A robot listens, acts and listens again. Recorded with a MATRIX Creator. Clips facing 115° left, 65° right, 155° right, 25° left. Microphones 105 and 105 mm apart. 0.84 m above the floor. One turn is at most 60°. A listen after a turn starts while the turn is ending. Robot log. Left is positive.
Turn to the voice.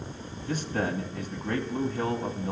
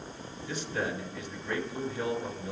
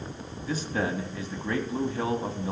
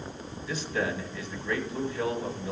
note: The man speaking: 155° left.
cmd yaw +60
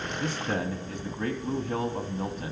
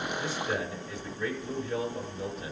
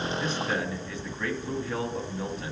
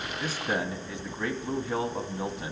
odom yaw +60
note: The man speaking is now 90° left.
cmd yaw +60
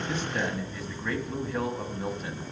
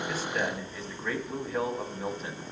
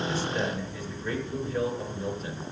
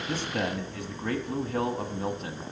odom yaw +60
note: The man speaking is now 25° left.
cmd yaw +25
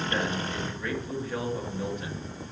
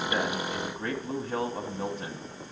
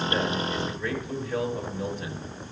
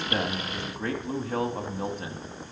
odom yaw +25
note: The man speaking is now 15° right.
cmd yaw -15
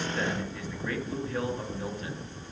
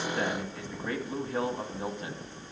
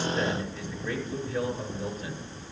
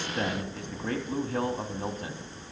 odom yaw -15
end: Found it: a man speaking, straight ahead, 1 to 2 m away.